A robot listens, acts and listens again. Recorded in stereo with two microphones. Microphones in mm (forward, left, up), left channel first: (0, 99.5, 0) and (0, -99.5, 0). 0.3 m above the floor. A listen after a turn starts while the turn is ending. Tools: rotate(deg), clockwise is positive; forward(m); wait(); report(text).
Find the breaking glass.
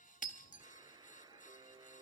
rotate(-40)
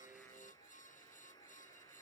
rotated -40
wait()
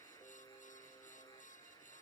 report("I heard breaking glass, but can't make it out now. It was about straight ahead or 100° left.")